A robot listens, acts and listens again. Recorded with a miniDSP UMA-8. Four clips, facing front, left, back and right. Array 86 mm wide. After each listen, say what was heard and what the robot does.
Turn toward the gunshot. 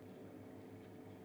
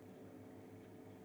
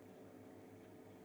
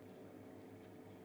Keep listening.
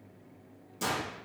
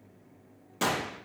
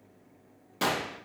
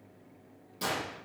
The gunshot: 135° left. Turn 135° left.
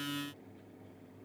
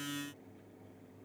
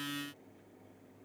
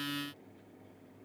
Facing where the gunshot came from. I can't hear it now.